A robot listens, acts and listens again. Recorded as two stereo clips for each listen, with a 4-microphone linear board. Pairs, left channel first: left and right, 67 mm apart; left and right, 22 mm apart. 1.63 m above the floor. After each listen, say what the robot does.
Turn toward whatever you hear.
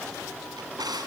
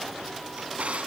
Turn 75° right.
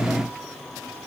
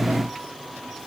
Keep listening.
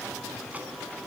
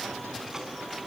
Keep listening.
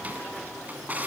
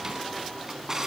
Turn 25° right.
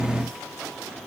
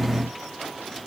Keep listening.
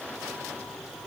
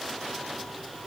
Keep listening.
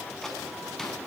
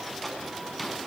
I heard a drawer from this way, but can't make it out now.